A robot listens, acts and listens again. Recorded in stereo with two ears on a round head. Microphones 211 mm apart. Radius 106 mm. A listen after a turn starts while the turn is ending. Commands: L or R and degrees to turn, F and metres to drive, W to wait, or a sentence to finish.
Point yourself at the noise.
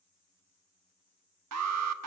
R70
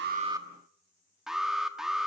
Found it: an alarm, straight ahead, 1 to 2 m away.